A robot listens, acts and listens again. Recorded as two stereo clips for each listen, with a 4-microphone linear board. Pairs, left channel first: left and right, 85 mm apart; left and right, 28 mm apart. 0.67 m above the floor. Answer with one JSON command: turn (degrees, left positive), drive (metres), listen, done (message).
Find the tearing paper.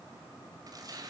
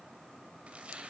{"turn": -45}
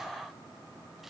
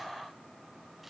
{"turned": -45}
{"listen": true}
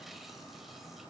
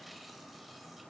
{"listen": true}
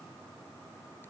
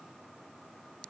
{"done": "I heard tearing paper, but can't make it out now. It was about straight ahead or 90° right."}